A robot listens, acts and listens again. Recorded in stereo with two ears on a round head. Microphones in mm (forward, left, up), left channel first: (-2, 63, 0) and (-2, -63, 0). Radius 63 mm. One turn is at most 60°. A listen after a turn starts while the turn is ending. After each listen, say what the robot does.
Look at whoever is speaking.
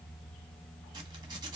Keep listening.
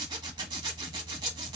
Keep listening.
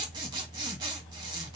I can't make out anyone speaking, only a zipper.